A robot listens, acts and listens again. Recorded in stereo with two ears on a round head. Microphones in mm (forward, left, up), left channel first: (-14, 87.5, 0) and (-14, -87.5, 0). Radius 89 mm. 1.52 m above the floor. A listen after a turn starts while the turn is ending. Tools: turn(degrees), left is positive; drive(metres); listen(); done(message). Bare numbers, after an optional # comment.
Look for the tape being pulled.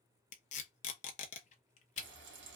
# The tape being pulled: about 35° left or 145° left.
turn(35)
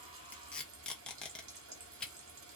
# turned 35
done("Found it: tape being pulled, straight ahead.")